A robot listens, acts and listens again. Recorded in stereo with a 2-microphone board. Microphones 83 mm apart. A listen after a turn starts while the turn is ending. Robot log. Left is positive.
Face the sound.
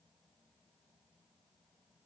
cmd idle
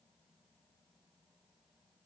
cmd idle
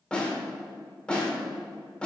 cmd yaw +30
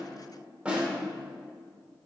note: So it is at 15° right.
cmd yaw -15
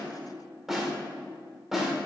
end: Facing the snare drum.